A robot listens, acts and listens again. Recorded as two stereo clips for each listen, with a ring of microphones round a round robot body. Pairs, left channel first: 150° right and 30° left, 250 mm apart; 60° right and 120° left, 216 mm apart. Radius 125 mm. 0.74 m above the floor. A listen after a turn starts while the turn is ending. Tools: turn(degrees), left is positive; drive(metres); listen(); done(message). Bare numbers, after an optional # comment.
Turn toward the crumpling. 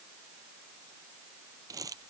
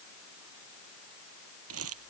# The crumpling: 105° left.
turn(105)
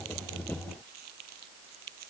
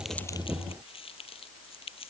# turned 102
done("Facing the crumpling.")